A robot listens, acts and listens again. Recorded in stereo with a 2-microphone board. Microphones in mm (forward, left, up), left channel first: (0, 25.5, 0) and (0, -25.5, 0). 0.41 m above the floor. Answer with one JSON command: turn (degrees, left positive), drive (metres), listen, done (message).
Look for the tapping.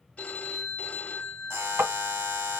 {"turn": -55}
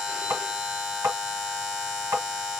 {"turn": -65}
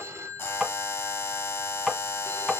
{"turn": -10}
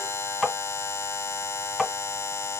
{"done": "Facing the tapping, 1 to 2 m away."}